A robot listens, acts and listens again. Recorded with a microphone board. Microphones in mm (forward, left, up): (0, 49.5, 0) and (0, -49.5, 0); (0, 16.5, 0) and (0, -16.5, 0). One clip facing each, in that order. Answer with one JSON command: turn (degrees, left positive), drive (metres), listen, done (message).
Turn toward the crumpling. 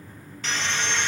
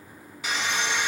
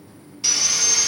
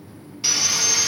{"listen": true}
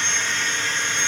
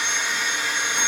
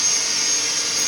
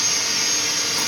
{"listen": true}
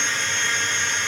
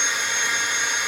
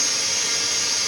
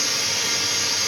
{"done": "I can't make out crumpling to turn to."}